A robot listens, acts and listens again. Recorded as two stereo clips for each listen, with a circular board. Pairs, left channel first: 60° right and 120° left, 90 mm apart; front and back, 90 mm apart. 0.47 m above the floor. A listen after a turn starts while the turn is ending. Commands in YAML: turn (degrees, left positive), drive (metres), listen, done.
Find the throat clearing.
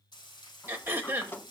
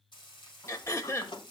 turn: 55
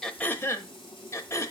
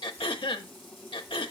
done: "Found it: throat clearing, straight ahead."